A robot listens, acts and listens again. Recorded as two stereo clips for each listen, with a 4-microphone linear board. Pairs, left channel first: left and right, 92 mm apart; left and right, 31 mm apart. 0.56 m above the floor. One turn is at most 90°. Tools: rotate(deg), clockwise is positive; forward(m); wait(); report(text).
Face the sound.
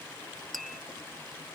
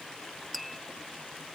rotate(-30)
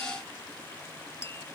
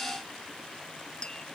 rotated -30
rotate(-90)
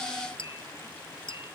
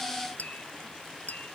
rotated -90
rotate(-75)
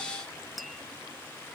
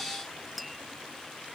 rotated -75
report("Found it: tapping, straight ahead.")